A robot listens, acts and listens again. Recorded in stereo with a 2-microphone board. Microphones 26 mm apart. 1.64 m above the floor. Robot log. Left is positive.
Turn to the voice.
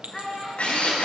cmd yaw +30
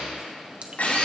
cmd idle
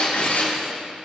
cmd idle
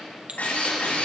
end: I heard a child speaking, but can't make it out now. It was about 20° right or 140° left.